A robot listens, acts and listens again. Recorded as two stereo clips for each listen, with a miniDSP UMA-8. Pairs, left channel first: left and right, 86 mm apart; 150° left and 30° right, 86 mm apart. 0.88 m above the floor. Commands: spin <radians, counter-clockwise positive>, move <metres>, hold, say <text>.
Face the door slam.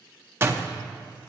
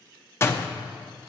spin -2.62
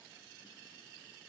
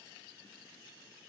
say I heard a door slam from this way, but can't make it out now.